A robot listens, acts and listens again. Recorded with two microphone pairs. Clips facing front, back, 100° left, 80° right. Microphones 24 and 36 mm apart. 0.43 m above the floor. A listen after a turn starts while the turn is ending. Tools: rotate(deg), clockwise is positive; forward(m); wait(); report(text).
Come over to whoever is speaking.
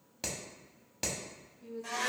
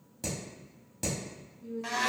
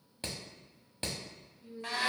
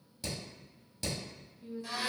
rotate(25)
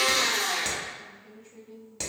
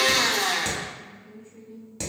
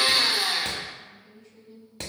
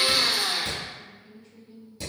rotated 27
forward(1.0)
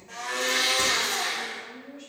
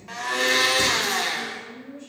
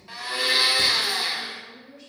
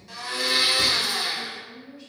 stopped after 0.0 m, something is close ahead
report("Something is in my way. I am facing the woman speaking but have not reached it.")